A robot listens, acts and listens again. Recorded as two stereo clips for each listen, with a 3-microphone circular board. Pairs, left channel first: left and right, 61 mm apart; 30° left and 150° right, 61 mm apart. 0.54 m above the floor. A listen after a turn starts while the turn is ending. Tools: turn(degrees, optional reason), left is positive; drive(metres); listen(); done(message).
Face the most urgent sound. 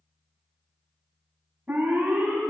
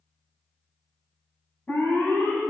turn(degrees=-25, reason="The alarm: 25° right.")
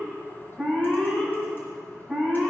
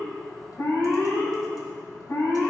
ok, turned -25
done("Facing the alarm.")